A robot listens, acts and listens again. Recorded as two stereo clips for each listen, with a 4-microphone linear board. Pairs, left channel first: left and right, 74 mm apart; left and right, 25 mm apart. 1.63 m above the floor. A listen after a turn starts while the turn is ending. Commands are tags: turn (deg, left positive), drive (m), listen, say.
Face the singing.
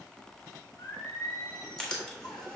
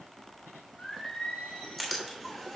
<turn deg="90"/>
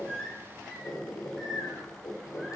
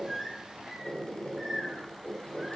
<say>Facing the singing, 2 to 4 m away.</say>